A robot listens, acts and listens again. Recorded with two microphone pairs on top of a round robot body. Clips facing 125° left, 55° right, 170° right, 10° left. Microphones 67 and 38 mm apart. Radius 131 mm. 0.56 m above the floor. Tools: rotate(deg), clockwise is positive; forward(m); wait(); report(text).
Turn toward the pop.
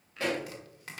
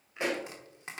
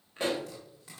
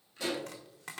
rotate(120)
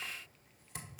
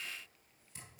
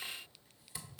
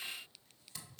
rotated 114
report("I heard a pop from this way, but can't make it out now.")